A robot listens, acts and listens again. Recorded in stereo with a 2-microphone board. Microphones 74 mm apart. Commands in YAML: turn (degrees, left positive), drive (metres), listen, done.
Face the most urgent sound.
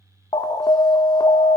turn: 60
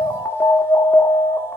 turn: 35
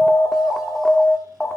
done: "Facing the alarm."